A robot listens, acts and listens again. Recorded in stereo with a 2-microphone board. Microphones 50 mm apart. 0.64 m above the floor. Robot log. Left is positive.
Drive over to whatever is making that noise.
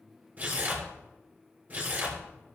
note: The tearing paper: about 30° right or 150° right.
cmd yaw -30
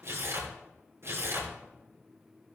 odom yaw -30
note: So it is at 125° right.
cmd yaw -125
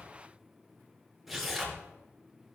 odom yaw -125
cmd fwd 1.0
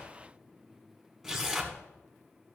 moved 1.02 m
note: The tearing paper is now 15° right.
cmd yaw -15
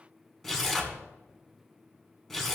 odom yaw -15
cmd fwd 1.0
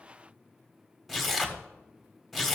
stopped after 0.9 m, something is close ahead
end: Arrived at the tearing paper, straight ahead.